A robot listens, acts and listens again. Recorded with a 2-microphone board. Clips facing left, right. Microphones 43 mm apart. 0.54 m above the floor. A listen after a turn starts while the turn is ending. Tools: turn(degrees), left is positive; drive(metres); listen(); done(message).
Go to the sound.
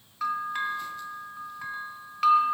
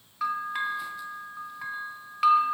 turn(degrees=-30)
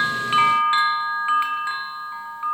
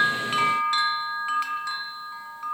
turn(degrees=25)
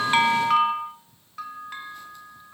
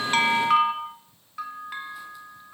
turn(degrees=-10)
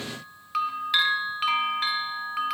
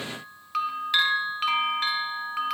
drive(metres=1.0)
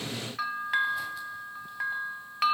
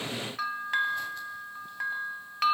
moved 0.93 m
drive(metres=1.0)
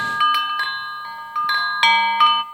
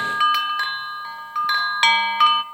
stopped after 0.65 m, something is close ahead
done("Arrived at the bell, straight ahead.")